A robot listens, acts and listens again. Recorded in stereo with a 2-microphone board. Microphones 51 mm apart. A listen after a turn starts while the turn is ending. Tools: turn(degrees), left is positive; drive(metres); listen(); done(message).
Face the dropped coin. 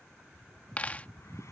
turn(degrees=30)
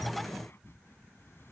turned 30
listen()
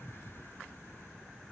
done("I heard a dropped coin, but can't make it out now. It was about straight ahead or 120° left.")